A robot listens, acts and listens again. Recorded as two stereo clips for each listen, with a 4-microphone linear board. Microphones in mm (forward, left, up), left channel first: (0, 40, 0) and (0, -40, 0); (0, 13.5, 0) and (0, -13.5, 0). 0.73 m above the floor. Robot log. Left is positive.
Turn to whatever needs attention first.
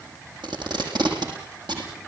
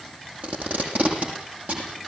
cmd idle
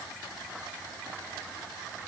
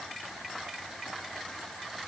cmd idle
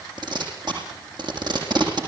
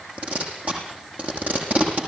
end: I can't make out anything urgent, only tape being pulled.